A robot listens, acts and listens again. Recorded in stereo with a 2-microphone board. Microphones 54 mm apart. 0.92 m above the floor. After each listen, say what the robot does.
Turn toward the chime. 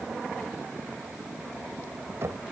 Keep listening.
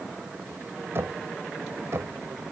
Keep listening.
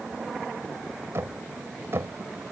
I can't make out a chime to turn to.